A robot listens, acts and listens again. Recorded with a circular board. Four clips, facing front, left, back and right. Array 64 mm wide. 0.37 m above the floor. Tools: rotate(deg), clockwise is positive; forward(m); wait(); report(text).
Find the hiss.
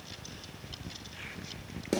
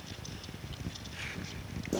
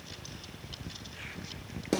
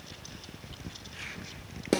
wait()
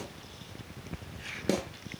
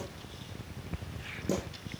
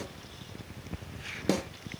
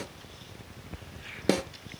wait()
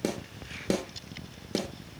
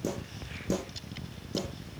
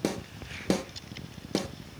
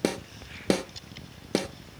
report("I can't make out a hiss, only a snare drum.")